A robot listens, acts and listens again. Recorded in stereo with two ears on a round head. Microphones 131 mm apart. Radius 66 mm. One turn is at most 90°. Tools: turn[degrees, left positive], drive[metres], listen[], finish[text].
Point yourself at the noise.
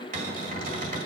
Thought: The cupboard door: about 50° right or 130° right.
Action: turn[-50]
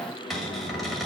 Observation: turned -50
Action: finish[Found it: a cupboard door, straight ahead.]